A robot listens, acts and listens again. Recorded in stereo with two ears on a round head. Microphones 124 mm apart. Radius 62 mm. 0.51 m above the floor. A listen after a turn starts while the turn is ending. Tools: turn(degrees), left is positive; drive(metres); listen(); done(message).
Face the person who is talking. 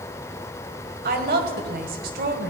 turn(degrees=-75)
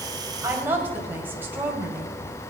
turn(degrees=-15)
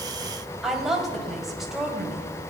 done("Facing the woman speaking.")